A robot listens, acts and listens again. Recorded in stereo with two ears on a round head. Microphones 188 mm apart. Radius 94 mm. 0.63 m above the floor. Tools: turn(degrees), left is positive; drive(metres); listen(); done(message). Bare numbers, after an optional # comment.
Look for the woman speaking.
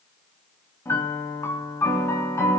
listen()
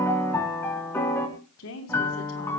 # The woman speaking: about 75° left or 105° left.
turn(75)
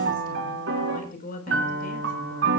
# So it is at 40° left.
turn(40)
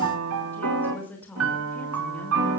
# The woman speaking is now 10° left.
turn(10)
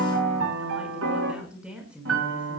done("Found it: a woman speaking, straight ahead, over 4 m away.")